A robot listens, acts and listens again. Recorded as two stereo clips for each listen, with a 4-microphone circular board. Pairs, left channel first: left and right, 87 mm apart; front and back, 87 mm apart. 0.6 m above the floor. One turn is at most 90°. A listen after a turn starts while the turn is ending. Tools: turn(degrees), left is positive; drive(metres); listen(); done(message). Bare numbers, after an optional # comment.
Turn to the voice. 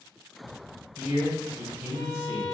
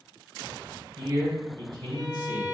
# The man speaking: 160° right.
turn(-90)
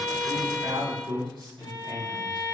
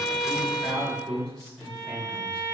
# The man speaking is now 75° right.
turn(-75)
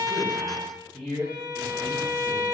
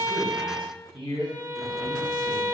# The man speaking is now 10° left.
turn(10)
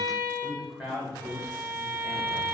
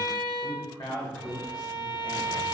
done("Found it: a man speaking, straight ahead, 1 to 2 m away.")